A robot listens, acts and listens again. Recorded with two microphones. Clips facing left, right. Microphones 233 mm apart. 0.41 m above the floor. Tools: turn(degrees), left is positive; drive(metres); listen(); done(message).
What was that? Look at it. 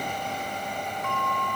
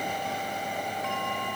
turn(degrees=60)
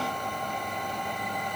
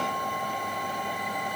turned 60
listen()
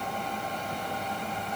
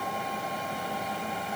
listen()
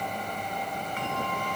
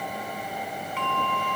turn(degrees=55)
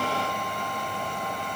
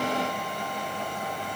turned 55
listen()
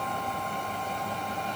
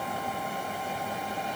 listen()
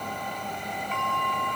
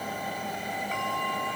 done("Found it: a bell, straight ahead, over 4 m away.")